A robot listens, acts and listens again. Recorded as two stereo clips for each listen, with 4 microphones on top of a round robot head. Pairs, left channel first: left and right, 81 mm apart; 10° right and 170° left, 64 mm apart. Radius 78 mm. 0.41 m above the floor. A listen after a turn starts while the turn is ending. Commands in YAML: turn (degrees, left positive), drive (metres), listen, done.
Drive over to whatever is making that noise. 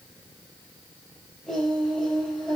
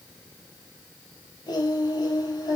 drive: 1.0
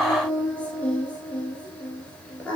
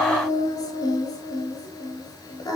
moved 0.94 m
turn: 15
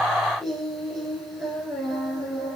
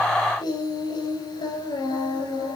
drive: 1.0
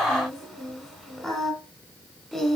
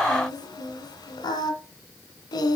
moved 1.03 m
drive: 1.0
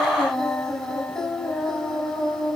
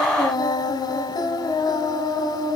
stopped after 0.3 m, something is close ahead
done: "I am next to the singing."